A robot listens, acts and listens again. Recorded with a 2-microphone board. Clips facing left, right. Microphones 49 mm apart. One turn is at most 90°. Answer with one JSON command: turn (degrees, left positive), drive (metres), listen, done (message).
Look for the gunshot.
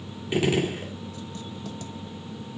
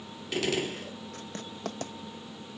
{"turn": 20}
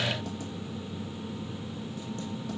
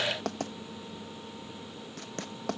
{"listen": true}
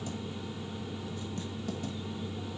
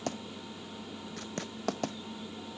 {"done": "I heard a gunshot, but can't make it out now. It was about straight ahead or 140° left."}